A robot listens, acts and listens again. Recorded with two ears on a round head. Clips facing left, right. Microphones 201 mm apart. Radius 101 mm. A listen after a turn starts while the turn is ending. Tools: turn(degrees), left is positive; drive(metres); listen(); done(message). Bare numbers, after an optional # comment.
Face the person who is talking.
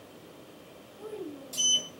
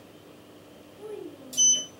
# The child speaking: about 60° right or 120° right.
turn(-60)
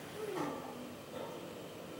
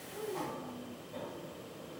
listen()
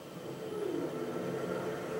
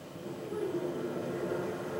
listen()
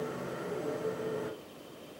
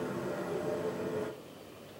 done("I heard a child speaking, but can't make it out now. It was about straight ahead or 60° right.")